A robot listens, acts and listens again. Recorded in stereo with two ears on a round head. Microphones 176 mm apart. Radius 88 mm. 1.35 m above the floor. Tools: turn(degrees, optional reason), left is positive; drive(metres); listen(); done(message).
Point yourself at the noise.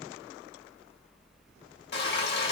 turn(degrees=55, reason="The frying: about 55° left or 125° left.")
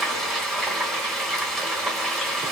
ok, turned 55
done("Facing the frying, 1 to 2 m away.")